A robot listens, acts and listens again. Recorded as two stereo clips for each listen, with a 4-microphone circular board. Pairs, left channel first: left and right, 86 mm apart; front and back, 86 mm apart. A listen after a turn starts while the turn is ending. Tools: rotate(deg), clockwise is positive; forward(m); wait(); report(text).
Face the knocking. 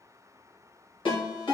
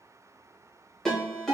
wait()
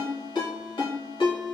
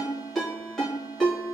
wait()
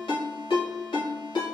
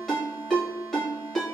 report("I can't make out knocking, only a ringtone.")